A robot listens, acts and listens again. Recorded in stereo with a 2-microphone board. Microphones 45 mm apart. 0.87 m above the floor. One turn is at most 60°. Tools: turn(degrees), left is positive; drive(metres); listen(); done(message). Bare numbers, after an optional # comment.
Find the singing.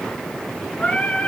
# The singing: about 25° left or 155° left.
turn(25)
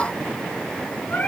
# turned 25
# So it is at 130° left.
turn(60)
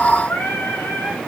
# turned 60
# The singing is now 55° left.
turn(55)
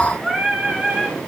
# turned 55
done("Found it: singing, straight ahead.")